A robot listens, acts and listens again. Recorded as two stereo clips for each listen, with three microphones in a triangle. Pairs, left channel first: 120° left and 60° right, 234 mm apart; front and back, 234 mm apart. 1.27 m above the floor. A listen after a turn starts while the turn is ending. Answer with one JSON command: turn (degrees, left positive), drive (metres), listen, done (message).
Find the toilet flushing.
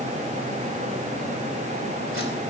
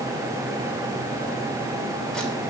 {"listen": true}
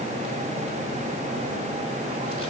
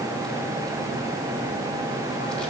{"listen": true}
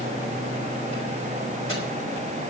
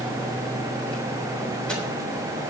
{"done": "I can't make out a toilet flushing to turn to."}